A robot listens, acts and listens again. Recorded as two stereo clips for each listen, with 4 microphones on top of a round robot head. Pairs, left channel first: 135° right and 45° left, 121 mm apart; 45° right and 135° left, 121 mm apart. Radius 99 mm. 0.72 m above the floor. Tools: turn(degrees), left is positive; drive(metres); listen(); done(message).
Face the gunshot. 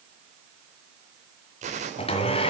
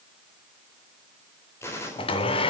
turn(degrees=25)
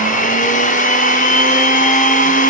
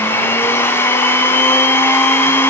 done("I heard a gunshot from this way, but can't make it out now.")